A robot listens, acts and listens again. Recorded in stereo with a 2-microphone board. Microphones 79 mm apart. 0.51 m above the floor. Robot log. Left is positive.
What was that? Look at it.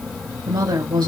note: The woman speaking: about 65° right or 115° right.
cmd yaw -65
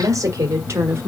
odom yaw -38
note: So it is at 30° right.
cmd yaw -30
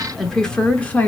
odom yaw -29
note: The woman speaking is now 20° left.
cmd yaw +20
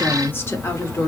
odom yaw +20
note: The woman speaking is now 40° left.
cmd yaw +40
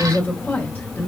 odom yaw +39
note: The woman speaking is now 30° left.
cmd yaw +30
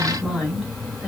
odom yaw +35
end: Facing the woman speaking, 1 to 2 m away.